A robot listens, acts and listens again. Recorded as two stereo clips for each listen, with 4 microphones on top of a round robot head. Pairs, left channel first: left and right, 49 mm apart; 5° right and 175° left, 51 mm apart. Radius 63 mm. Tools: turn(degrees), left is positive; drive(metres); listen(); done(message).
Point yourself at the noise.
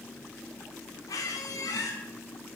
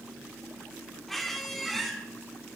turn(degrees=80)
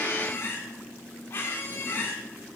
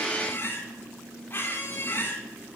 turn(degrees=40)
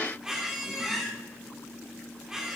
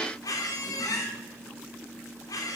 turn(degrees=-10)
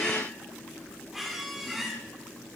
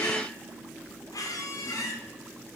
done("Facing the squeak, 1 to 2 m away.")